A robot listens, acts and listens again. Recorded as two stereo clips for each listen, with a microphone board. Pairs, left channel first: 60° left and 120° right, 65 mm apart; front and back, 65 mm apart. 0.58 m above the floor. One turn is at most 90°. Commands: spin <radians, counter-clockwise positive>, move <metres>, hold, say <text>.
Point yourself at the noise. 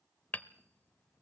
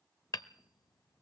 say Found it: hammering, straight ahead.